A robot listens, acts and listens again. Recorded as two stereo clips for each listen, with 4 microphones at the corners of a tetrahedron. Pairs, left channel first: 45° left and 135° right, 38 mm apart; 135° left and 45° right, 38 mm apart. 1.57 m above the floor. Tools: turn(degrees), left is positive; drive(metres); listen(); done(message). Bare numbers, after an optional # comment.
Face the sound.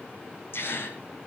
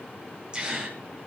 # The gasp: 20° left.
turn(20)
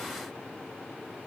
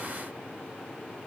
done("I heard a gasp from this way, but can't make it out now.")